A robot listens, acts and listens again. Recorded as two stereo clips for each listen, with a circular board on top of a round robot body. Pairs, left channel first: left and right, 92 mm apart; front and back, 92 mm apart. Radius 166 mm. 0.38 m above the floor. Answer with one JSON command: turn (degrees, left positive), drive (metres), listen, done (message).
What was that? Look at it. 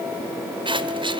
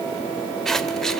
{"turn": -85}
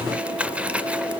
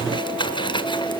{"turn": -15}
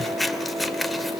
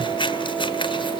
{"done": "Found it: scissors, straight ahead, 1 to 2 m away."}